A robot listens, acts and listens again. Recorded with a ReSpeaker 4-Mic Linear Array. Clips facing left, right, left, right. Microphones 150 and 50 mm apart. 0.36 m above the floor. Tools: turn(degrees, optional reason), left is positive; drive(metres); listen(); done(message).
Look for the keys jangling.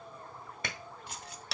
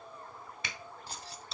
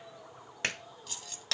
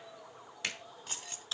turn(degrees=-35, reason="The keys jangling: about 35° right or 145° right.")
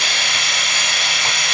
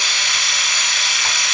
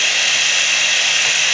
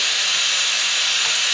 listen()
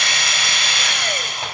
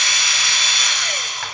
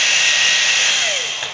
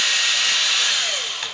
listen()
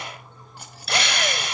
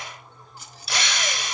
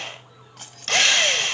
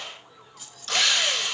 turn(degrees=60, reason="So it is at 60° left.")
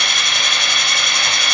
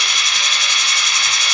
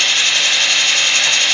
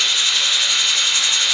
listen()
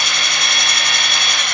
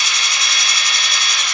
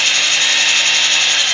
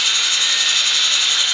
listen()
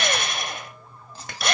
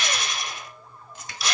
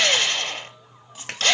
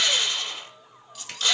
turn(degrees=35, reason="The keys jangling is now 35° left.")
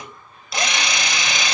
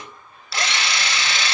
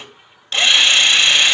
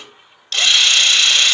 listen()
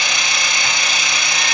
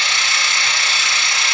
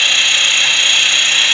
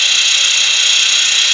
listen()
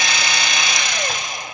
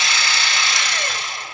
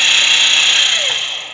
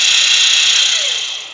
done("Facing where the keys jangling came from. I can't hear it now.")